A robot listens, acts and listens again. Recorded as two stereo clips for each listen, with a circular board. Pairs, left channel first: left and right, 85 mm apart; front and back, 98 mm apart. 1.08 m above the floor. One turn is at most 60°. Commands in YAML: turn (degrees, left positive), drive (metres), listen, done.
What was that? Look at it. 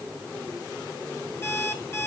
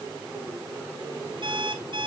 turn: 60
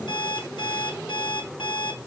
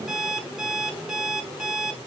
turn: 60
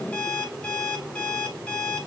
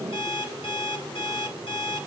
turn: 15
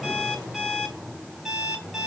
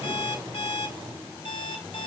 done: "Found it: an alarm clock, straight ahead, 2 to 4 m away."